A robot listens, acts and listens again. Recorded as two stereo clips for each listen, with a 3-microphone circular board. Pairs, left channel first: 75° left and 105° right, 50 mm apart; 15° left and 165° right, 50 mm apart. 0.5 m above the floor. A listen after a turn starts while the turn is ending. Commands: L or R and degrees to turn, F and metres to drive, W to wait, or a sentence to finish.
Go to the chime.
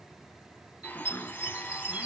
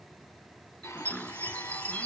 R50
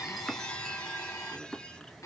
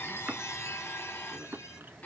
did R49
W
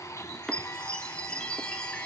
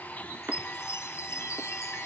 F1.0
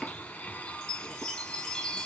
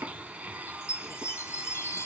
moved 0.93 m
F1.0
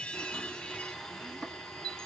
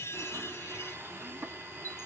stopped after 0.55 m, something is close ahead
Arrived at the chime, straight ahead.